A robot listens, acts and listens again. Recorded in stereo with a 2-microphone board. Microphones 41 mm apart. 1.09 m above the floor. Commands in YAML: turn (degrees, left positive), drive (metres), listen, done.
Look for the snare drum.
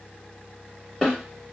turn: 30
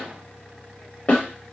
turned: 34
turn: 140
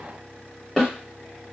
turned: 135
done: "Found it: a snare drum, straight ahead."